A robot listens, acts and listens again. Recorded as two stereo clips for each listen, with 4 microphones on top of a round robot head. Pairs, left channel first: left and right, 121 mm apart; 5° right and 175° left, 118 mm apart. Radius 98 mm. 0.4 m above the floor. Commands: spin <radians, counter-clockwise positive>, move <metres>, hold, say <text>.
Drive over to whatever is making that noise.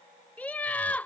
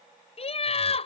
spin 0.17
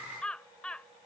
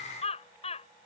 spin 0.17
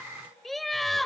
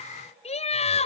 move 1.0
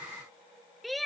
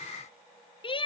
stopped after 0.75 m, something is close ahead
say Arrived at the laughter, straight ahead.